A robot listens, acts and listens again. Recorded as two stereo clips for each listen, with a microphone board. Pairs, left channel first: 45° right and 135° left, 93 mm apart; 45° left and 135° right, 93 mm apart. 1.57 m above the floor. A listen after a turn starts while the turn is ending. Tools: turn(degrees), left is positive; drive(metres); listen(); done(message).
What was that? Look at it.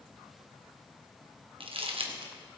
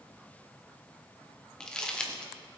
turn(degrees=125)
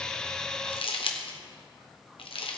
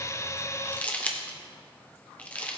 turn(degrees=-30)
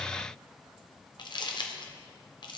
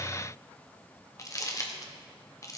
turn(degrees=-10)
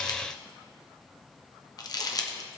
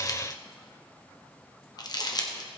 done("Found it: crumpling, straight ahead, 1 to 2 m away.")